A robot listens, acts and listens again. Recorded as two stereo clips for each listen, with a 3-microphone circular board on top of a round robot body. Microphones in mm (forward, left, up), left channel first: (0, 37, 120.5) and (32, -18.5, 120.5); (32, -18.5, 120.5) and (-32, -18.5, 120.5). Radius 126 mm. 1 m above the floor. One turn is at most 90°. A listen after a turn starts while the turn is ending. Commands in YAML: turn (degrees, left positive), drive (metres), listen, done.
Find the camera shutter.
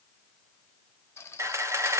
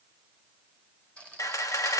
turn: -25
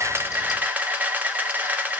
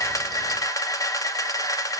done: "Facing the camera shutter, 2 to 4 m away."